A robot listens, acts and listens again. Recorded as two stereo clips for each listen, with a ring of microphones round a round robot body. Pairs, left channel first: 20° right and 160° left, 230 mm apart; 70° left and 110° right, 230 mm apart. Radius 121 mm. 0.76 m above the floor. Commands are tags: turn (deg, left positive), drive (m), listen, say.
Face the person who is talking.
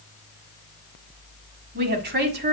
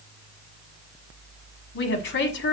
<turn deg="110"/>
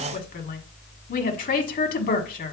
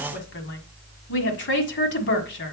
<turn deg="30"/>
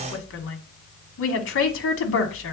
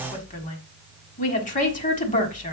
<turn deg="10"/>
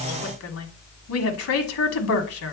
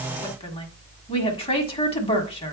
<say>Found it: a woman speaking, straight ahead, 1 to 2 m away.</say>